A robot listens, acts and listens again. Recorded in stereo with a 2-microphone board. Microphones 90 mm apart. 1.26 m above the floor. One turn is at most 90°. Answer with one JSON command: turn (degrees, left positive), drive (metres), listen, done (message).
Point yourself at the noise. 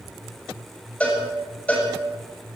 {"turn": 30}
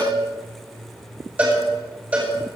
{"turn": -15}
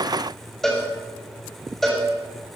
{"done": "Found it: a cowbell, straight ahead."}